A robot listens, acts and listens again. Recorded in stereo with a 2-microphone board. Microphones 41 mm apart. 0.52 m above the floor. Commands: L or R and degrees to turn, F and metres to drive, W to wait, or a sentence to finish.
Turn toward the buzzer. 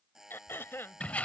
R30
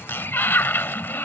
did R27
W
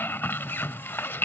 W
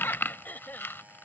I heard a buzzer, but can't make it out now. It was about 15° left or 140° right.